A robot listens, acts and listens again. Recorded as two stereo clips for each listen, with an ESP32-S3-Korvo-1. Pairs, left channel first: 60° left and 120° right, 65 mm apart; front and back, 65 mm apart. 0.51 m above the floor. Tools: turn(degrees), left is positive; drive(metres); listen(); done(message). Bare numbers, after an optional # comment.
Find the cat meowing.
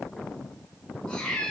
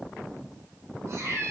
# The cat meowing: 135° left.
turn(135)
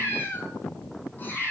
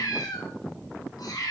done("Found it: a cat meowing, straight ahead.")